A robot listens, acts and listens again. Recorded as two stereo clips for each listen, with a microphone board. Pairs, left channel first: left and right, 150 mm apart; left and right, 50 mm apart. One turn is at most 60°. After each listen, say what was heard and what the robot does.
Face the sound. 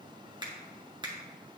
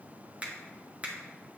The finger snap: about 30° right or 150° right. Turn 30° right.
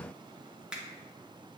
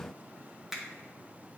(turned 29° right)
Found it: a finger snap, straight ahead, 1 to 2 m away.